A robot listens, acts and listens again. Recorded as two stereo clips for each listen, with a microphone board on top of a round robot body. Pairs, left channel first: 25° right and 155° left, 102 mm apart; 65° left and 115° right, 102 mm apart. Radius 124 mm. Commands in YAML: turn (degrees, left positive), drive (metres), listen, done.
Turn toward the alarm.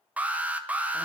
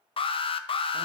turn: 85
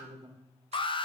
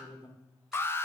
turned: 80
done: "Found it: an alarm, straight ahead."